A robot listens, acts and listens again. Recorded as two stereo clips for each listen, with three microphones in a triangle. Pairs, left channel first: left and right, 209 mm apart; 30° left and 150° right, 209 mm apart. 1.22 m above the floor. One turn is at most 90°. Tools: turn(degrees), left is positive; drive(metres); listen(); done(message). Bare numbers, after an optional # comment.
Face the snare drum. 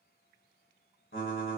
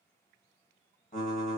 listen()
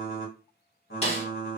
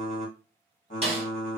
# The snare drum: 150° left.
turn(90)
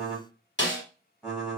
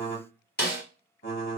# The snare drum is now 65° left.
turn(65)
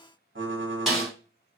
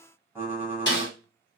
done("Facing the snare drum.")